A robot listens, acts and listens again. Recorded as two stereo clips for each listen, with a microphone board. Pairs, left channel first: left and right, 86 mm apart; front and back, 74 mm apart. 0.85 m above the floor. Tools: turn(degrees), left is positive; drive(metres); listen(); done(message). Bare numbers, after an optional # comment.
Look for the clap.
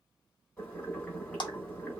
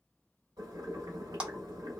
# The clap: 105° left.
turn(105)
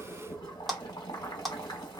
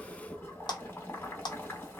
done("Facing the clap, under 1 m away.")